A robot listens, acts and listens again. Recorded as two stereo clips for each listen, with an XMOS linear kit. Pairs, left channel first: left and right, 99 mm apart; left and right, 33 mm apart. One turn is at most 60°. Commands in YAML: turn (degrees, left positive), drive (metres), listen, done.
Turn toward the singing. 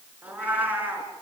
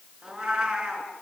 listen: true
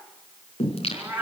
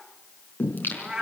turn: 60
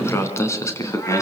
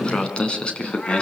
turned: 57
turn: 30
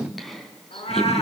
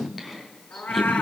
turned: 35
done: "Found it: singing, straight ahead."